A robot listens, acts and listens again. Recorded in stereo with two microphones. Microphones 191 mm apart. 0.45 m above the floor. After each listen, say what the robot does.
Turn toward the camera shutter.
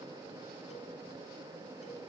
Keep listening.
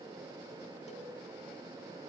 Keep listening.
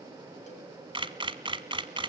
Turn 25° right.
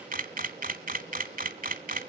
Turn 130° right.
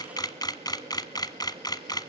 Turn 20° left.
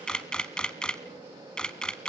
Found it: a camera shutter, straight ahead.